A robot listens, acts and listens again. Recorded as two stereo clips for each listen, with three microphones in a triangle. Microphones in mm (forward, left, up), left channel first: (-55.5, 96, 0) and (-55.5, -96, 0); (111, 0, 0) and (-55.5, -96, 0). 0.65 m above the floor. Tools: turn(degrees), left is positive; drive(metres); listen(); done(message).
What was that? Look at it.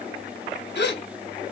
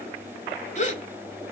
turn(degrees=75)
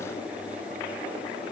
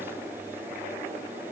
done("Facing where the gasp came from. I can't hear it now.")